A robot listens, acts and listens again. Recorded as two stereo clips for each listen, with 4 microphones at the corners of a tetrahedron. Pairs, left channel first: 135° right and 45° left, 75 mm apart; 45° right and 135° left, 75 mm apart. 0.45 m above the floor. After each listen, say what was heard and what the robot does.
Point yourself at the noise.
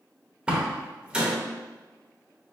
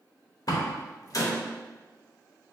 The door slam: 30° right. Turn 30° right.
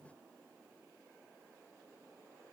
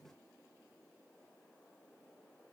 I heard a door slam from this way, but can't make it out now.